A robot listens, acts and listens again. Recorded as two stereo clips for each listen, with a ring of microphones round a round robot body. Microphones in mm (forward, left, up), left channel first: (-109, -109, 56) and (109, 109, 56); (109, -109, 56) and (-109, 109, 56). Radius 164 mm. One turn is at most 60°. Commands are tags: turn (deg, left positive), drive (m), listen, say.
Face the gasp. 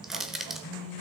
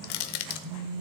<listen/>
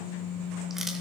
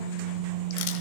<listen/>
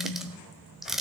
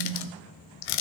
<say>I can't make out a gasp to turn to.</say>